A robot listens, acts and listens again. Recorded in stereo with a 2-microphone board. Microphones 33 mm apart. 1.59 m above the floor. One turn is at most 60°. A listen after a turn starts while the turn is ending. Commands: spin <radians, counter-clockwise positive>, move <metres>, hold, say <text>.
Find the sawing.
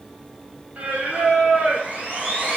spin -0.79
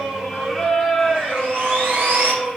spin -1.05
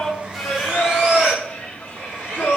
spin -0.61
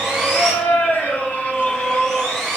spin 0.17
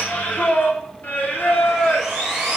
say Facing the sawing, over 4 m away.